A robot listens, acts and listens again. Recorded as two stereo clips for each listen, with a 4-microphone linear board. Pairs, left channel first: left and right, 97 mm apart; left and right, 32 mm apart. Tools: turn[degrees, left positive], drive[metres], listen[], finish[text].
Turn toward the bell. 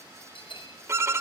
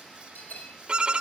Thought: The bell: about 65° left or 115° left.
Action: turn[65]
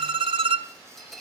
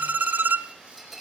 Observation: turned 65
Action: finish[Facing the bell.]